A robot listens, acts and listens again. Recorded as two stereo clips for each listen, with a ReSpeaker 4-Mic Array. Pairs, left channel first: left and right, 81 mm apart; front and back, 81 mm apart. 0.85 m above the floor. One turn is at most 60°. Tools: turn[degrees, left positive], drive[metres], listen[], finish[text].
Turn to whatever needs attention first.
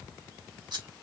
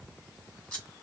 Action: listen[]
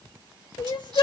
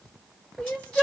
Thought: The crying: 75° left.
Action: turn[60]
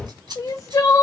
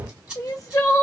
Thought: The crying is now 45° left.
Action: turn[45]
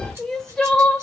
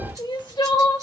Action: finish[Found it: crying, straight ahead.]